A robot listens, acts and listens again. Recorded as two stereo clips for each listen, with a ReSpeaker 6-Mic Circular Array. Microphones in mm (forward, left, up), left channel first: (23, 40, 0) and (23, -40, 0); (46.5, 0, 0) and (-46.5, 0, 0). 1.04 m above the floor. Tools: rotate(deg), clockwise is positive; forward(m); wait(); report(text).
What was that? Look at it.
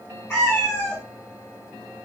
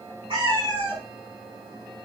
rotate(-150)
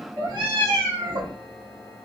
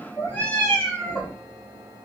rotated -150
rotate(90)
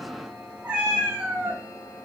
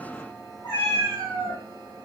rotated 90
rotate(20)
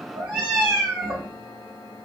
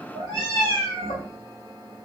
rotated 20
report("Facing the cat meowing.")